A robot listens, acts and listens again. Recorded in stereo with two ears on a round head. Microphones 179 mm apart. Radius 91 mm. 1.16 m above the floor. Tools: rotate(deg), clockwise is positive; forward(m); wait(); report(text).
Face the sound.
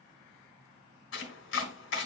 rotate(-65)
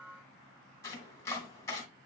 rotate(-15)
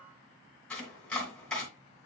report("Found it: chopping, straight ahead.")